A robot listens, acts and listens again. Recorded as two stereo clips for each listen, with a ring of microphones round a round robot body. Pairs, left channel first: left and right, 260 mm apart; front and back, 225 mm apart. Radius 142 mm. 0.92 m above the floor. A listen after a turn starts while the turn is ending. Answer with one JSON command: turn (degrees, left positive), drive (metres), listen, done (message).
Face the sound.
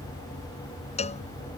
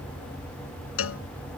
{"turn": 25}
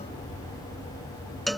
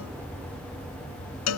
{"done": "Found it: a cowbell, straight ahead."}